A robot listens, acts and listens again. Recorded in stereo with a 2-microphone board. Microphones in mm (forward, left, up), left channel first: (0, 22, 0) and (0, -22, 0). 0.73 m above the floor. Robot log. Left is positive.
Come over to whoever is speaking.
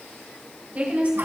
note: The woman speaking: about 35° right or 145° right.
cmd yaw -35
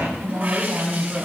note: So it is at 110° right.
cmd yaw -110
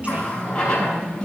note: The woman speaking is now 35° right.
cmd yaw -35
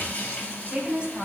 note: The woman speaking is now 25° right.
cmd yaw -25
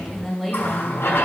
cmd fwd 1.0
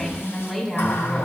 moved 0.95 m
note: The woman speaking is now 10° left.
cmd yaw +10
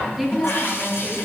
cmd fwd 1.0
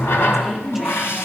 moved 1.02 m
cmd idle
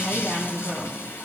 cmd fwd 1.0
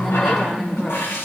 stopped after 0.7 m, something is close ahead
end: I am next to the woman speaking.